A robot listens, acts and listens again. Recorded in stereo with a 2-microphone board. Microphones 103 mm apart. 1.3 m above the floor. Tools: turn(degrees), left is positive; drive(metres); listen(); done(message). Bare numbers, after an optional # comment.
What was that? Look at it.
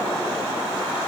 listen()
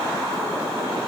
listen()
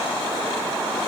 done("I can't make out anything to turn to.")